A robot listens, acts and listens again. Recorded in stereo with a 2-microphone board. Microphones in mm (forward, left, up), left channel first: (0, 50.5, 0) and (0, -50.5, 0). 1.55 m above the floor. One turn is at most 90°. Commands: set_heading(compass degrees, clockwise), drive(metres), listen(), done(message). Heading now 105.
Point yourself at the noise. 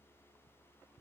listen()
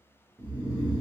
set_heading(160)
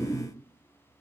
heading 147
set_heading(162)
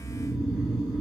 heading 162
done("Facing the snoring, 1 to 2 m away.")